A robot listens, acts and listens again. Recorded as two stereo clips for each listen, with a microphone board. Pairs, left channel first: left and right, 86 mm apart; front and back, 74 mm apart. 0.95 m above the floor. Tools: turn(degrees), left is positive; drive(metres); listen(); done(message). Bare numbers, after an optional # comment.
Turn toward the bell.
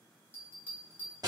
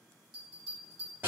# The bell: 25° left.
turn(25)
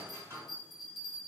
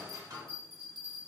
done("Found it: a bell, straight ahead, 1 to 2 m away.")